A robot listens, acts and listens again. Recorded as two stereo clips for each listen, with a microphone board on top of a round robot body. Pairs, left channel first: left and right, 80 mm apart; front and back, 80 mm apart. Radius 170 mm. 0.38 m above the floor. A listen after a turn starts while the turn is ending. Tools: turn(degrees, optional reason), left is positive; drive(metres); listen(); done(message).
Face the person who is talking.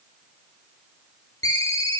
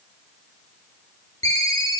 listen()
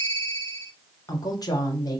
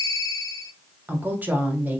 turn(degrees=115, reason="The woman speaking: 115° left.")
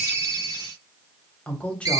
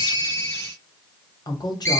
turn(degrees=20, reason="The woman speaking is now 20° left.")
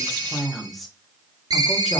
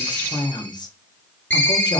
done("Found it: a woman speaking, straight ahead, 1 to 2 m away.")